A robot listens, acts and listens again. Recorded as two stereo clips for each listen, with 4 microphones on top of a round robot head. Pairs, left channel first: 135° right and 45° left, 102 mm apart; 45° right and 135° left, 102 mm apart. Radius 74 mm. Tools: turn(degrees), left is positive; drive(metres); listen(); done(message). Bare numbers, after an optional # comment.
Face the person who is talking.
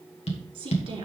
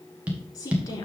done("Facing the woman speaking.")